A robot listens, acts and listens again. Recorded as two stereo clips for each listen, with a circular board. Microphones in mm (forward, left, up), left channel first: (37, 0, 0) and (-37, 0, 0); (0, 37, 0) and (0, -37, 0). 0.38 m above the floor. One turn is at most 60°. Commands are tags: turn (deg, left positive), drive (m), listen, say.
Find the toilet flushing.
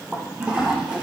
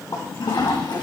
<turn deg="60"/>
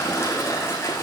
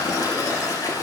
<turn deg="55"/>
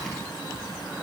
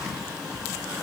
<listen/>
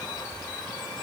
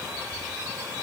<listen/>
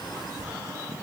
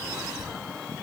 <say>Facing where the toilet flushing came from. I can't hear it now.</say>